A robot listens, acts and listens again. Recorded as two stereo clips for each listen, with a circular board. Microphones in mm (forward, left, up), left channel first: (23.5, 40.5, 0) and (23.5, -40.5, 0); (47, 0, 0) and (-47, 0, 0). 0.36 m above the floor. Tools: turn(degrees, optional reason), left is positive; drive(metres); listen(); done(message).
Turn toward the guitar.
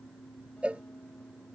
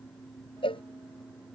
listen()
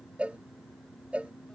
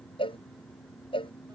listen()
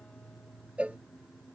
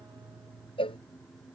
done("I can't make out a guitar, only a cowbell.")